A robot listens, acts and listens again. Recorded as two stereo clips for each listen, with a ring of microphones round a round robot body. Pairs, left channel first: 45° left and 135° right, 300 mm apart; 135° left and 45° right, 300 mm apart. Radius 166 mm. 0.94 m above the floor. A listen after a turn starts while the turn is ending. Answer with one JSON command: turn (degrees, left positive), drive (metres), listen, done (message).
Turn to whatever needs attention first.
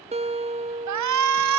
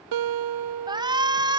{"turn": -120}
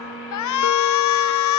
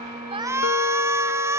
{"turn": 35}
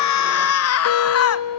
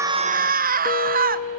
{"turn": 15}
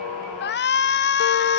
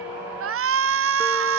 {"done": "Facing the shout."}